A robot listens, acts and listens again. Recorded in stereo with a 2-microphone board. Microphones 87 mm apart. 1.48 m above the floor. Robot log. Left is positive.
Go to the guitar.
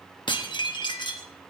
cmd idle
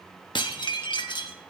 cmd idle
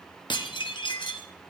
end: I can't make out a guitar, only dishes clattering.